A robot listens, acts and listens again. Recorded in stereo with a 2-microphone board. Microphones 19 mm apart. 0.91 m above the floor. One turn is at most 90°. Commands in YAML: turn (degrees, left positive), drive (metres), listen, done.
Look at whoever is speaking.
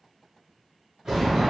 listen: true
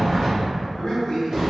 turn: 55
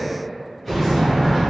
listen: true
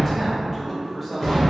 done: "Facing the man speaking."